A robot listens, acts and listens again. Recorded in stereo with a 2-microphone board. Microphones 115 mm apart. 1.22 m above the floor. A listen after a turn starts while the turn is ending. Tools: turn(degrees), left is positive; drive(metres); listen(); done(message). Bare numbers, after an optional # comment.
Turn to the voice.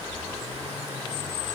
listen()
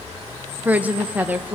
turn(-30)
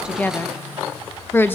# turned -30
# So it is at 20° left.
turn(20)
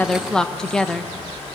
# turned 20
done("Facing the woman speaking, 1 to 2 m away.")